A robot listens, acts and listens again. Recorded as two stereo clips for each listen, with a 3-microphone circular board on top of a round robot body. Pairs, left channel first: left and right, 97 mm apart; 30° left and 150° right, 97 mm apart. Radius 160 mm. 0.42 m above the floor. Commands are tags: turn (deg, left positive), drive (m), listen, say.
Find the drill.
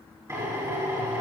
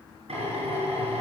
<turn deg="-150"/>
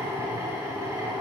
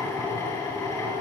<turn deg="-25"/>
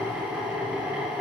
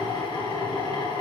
<say>Found it: a drill, straight ahead.</say>